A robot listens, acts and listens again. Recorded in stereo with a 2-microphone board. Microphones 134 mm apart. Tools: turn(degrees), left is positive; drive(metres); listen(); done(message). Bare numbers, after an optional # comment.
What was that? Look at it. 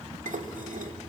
turn(-90)
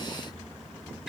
listen()
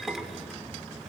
done("Facing the dishes clattering.")